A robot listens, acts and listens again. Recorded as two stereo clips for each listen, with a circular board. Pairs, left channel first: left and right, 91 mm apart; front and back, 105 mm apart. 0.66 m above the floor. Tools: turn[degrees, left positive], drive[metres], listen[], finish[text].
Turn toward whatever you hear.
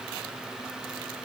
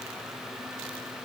Action: listen[]
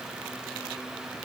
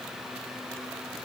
Action: listen[]
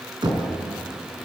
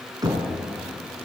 Thought: The knocking: 125° right.
Action: turn[-125]
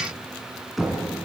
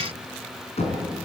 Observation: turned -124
Action: finish[Found it: knocking, straight ahead, over 4 m away.]